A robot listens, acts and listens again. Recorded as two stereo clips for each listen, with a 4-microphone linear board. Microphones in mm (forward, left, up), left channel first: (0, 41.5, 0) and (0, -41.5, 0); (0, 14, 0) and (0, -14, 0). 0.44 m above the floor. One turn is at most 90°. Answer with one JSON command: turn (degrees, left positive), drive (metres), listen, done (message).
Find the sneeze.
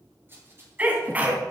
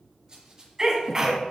{"turn": -20}
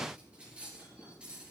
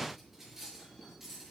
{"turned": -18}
{"listen": true}
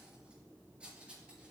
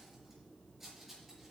{"done": "I heard a sneeze, but can't make it out now. It was about 5° right or 140° right."}